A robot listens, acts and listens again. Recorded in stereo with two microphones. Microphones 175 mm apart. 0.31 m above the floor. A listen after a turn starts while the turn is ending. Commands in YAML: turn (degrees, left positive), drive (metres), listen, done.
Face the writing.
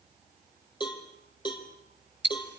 listen: true
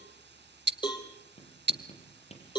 turn: 35
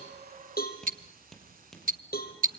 done: "Found it: writing, straight ahead."